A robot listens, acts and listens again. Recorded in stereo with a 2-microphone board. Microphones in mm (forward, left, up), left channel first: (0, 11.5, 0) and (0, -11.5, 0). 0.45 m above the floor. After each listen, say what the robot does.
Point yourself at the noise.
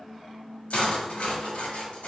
Turn 90° left.
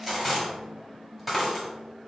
Facing the cutlery clinking.